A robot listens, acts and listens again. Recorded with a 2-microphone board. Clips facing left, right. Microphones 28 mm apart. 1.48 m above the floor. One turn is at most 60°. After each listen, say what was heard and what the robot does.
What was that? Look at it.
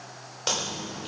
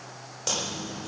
The chewing: about 30° left or 150° left. Turn 30° left.
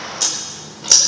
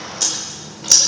Found it: chewing, straight ahead, 2 to 4 m away.